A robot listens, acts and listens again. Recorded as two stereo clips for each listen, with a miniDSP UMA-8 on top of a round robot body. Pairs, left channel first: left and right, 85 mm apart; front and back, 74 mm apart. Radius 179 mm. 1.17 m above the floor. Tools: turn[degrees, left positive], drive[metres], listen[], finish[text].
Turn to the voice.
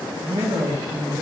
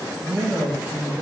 Thought: The man speaking: 115° right.
Action: turn[-115]
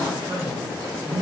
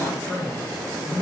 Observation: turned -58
Thought: The man speaking is now 55° right.
Action: turn[-55]
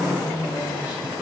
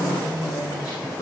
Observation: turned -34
Thought: The man speaking is now 20° right.
Action: turn[-20]
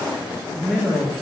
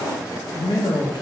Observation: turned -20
Action: finish[Found it: a man speaking, straight ahead.]